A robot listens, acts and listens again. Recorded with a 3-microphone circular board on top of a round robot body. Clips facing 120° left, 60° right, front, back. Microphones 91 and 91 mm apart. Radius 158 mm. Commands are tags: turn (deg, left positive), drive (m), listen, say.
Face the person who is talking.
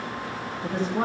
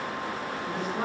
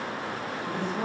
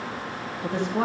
<turn deg="180"/>
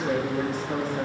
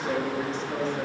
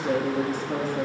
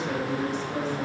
<turn deg="35"/>
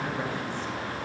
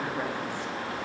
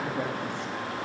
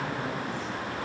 <listen/>
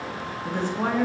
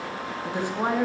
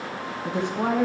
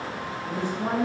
<turn deg="15"/>
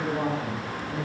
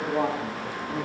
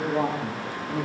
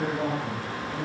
<say>Found it: a woman speaking, straight ahead, 2 to 4 m away.</say>